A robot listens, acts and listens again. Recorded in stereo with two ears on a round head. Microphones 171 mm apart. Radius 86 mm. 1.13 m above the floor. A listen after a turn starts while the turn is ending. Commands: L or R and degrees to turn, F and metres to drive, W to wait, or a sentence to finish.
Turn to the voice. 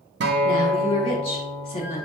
L30
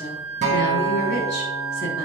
W
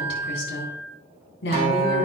L120
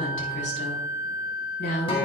L55
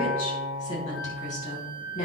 L40
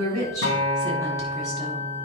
W
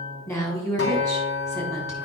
L15
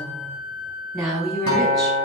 Found it: a woman speaking, straight ahead.